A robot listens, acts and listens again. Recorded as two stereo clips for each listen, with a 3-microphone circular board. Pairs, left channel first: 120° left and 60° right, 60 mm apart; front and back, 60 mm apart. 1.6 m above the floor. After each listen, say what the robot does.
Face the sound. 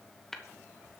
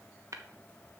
Turn 155° right.
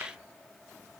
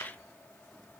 Keep listening.
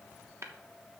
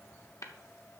Turn 25° right.
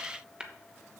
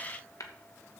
Turn 15° left.
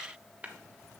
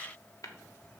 Found it: tapping, straight ahead.